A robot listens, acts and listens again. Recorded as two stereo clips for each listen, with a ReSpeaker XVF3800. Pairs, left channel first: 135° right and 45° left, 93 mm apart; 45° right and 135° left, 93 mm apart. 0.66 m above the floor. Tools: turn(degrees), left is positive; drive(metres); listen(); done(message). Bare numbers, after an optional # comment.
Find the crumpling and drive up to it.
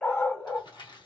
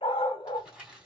# The crumpling: 145° right.
turn(-145)
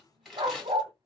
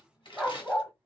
# The crumpling is now 50° right.
turn(-50)
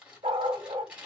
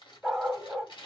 # The crumpling is now 35° right.
turn(-35)
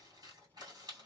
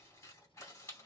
# The crumpling is now 10° left.
turn(10)
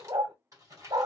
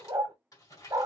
drive(1.0)
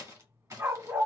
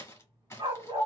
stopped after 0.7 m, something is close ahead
done("Arrived at the crumpling, straight ahead.")